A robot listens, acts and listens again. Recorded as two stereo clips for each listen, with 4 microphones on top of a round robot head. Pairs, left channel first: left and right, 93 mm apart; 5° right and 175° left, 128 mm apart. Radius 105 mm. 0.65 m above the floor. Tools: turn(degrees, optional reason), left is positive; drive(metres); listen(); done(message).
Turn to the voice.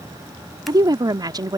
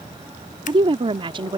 turn(degrees=-135, reason="The woman speaking: 135° right.")
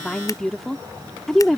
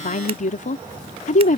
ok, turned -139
done("Facing the woman speaking.")